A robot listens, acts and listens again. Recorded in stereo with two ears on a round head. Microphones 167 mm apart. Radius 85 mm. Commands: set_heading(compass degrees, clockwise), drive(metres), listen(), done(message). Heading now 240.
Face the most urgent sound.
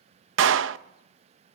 listen()
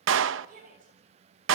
set_heading(285)
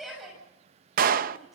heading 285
done("Facing the shout, over 4 m away.")